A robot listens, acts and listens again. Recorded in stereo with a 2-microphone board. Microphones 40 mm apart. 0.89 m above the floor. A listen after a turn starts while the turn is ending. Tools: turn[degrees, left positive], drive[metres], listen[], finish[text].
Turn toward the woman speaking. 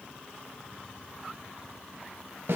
Action: listen[]
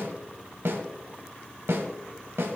Action: listen[]
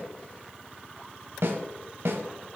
Action: finish[I can't make out a woman speaking, only a snare drum.]